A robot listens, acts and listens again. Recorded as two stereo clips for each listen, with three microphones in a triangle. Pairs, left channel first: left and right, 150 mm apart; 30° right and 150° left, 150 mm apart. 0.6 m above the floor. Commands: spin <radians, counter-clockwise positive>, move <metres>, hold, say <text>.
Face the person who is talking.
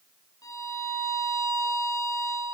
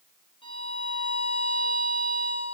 hold
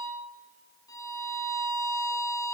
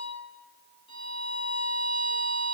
hold
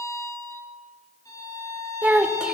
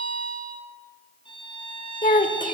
say Found it: a child speaking, straight ahead.